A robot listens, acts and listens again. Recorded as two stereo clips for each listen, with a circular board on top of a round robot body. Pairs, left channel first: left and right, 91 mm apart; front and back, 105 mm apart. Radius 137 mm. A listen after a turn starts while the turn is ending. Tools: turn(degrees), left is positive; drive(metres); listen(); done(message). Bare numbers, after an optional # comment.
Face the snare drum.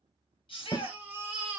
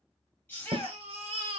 # The snare drum: 140° left.
turn(140)
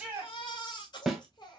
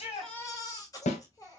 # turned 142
done("Found it: a snare drum, straight ahead, under 1 m away.")